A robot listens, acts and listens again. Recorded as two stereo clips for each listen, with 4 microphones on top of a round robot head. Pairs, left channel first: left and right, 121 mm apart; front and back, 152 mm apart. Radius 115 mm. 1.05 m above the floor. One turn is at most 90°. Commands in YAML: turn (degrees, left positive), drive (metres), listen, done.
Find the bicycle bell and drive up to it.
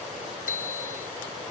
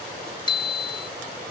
turn: 60
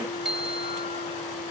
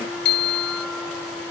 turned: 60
drive: 1.0
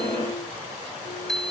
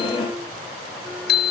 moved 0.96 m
drive: 1.0
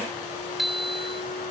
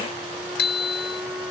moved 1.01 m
drive: 1.0
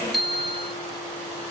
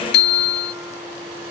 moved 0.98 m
drive: 1.0
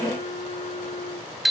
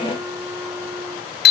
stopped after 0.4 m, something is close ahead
done: "I am next to the bicycle bell."